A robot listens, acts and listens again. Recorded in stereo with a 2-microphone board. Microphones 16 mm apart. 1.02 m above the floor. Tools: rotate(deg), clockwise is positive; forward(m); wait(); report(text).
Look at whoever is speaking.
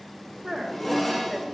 rotate(65)
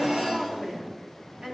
rotate(45)
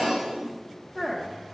rotate(20)
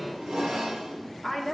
report("Found it: a woman speaking, straight ahead.")